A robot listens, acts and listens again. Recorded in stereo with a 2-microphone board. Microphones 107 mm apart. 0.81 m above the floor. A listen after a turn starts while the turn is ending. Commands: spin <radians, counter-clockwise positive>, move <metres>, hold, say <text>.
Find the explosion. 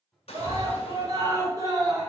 spin 1.22
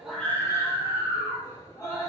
hold
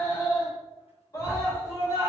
say I heard an explosion, but can't make it out now. It was about straight ahead or 40° left.